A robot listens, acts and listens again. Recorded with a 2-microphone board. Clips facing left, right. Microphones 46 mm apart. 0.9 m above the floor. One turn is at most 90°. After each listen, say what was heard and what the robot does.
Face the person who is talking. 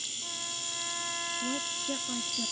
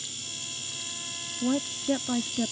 The woman speaking: about 40° right or 140° right. Turn 40° right.
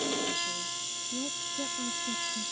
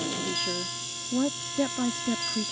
So it is at 95° right. Turn 90° right.
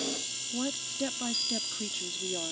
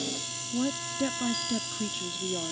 Facing the woman speaking.